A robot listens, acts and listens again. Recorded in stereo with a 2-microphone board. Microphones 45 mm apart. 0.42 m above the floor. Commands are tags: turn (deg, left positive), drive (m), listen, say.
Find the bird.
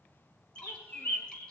<turn deg="50"/>
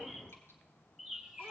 <say>Found it: a bird, straight ahead, 1 to 2 m away.</say>